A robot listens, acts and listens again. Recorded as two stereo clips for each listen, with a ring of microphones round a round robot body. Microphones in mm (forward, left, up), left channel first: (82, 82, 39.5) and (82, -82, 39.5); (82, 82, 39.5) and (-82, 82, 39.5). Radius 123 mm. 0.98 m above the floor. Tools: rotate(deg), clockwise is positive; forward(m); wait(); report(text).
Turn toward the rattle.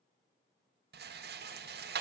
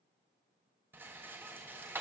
rotate(100)
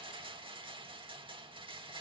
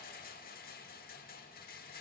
rotate(30)
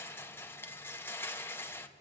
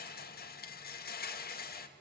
rotate(-15)
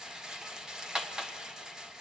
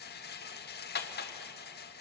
report("Facing the rattle, 1 to 2 m away.")